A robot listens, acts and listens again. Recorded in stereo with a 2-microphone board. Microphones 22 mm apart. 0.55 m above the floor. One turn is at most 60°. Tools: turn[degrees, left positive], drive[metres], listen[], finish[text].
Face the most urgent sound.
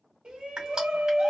Thought: The shout: about 60° right or 120° right.
Action: turn[-60]
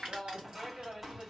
Thought: So it is at 15° right.
Action: turn[-15]
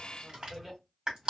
Action: finish[Found it: a shout, straight ahead, 1 to 2 m away.]